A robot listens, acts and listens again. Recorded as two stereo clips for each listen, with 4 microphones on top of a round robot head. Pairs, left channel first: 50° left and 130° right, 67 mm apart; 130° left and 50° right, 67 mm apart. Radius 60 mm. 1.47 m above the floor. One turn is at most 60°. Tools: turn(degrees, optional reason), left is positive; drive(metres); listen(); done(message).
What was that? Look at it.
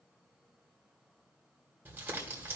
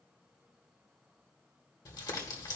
turn(degrees=60, reason="The crumpling: 165° left.")
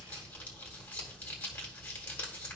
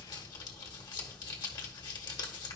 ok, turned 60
turn(degrees=60, reason="The crumpling is now 110° left.")
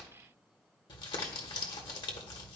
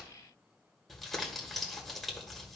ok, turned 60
turn(degrees=45, reason="The crumpling is now 45° left.")
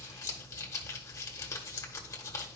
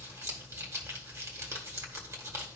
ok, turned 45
done("Found it: crumpling, straight ahead, 1 to 2 m away.")